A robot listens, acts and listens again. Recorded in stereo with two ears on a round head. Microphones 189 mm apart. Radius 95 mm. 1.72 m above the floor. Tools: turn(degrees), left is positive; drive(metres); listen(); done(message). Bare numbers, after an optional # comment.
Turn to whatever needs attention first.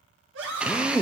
# The scream: about 60° right or 120° right.
turn(-60)
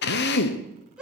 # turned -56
done("Facing the scream.")